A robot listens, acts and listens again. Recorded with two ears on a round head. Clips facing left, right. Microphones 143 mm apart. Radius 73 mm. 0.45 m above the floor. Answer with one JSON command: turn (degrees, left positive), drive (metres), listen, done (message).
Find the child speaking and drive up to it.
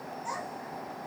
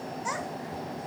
{"turn": -90}
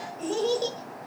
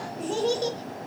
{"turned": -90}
{"drive": 1.0}
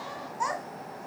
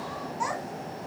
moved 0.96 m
{"turn": -10}
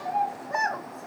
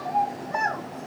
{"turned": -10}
{"drive": 1.0}
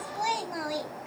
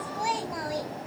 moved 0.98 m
{"drive": 1.0}
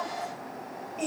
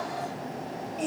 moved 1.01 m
{"drive": 1.0}
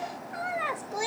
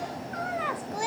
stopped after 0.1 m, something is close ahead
{"turn": 10}
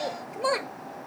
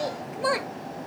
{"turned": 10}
{"done": "I am next to the child speaking."}